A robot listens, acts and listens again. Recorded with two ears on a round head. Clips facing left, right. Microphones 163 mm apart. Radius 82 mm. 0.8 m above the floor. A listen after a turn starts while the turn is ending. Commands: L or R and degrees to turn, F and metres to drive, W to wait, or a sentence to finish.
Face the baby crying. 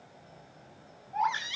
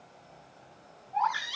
L20
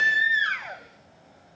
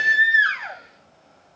Found it: a baby crying, straight ahead, over 4 m away.